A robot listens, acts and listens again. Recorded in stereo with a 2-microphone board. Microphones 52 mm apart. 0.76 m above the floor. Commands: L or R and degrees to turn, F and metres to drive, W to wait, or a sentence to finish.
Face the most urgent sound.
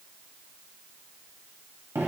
W
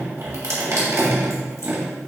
W
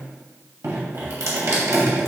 I can't make out anything urgent to turn to.